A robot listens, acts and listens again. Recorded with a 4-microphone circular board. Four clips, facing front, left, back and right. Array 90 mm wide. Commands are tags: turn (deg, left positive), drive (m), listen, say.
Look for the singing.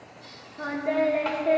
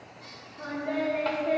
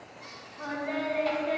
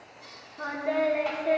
<turn deg="-20"/>
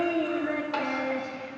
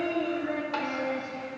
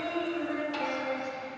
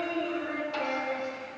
<turn deg="20"/>
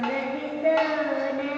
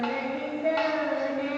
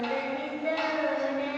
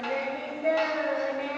<turn deg="15"/>
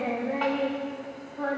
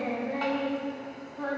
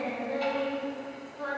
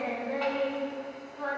<turn deg="15"/>
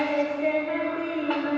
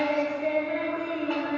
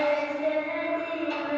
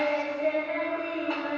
<say>Facing the singing.</say>